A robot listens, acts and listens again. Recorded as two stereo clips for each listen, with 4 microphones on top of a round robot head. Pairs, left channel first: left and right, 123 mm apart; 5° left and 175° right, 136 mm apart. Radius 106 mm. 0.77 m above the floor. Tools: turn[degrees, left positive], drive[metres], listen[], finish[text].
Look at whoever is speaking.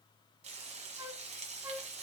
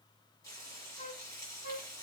Action: listen[]
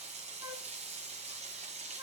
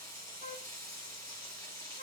Action: listen[]
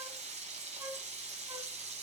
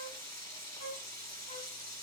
Action: finish[I can't make out anyone speaking to turn to.]